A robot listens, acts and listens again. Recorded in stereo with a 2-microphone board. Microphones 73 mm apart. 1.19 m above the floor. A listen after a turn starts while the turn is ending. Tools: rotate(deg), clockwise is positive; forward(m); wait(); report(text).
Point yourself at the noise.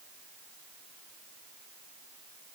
wait()
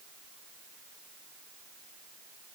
wait()
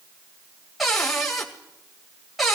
rotate(-30)
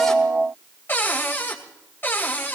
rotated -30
rotate(-150)
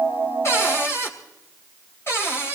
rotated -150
rotate(-35)
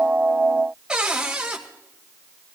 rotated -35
rotate(15)
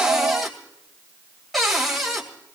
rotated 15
report("Facing the cupboard door.")